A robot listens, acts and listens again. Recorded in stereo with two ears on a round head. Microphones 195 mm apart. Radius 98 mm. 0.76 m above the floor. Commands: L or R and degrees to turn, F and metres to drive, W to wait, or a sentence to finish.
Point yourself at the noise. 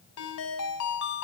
L90
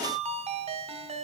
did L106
R30
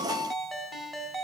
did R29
Found it: a ringtone, straight ahead, 2 to 4 m away.